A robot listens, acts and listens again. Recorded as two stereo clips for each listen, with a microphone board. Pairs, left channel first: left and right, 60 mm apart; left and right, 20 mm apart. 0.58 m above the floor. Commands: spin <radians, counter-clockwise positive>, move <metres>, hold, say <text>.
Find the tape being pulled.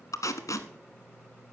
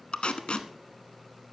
spin 1.22
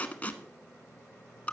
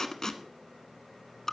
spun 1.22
spin 0.44
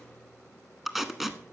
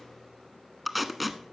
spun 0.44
say Facing the tape being pulled.